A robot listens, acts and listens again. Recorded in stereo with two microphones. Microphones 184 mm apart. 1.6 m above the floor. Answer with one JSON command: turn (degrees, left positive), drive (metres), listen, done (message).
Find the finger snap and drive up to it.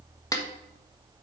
{"listen": true}
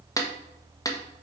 {"listen": true}
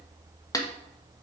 {"done": "I can't make out a finger snap to turn to."}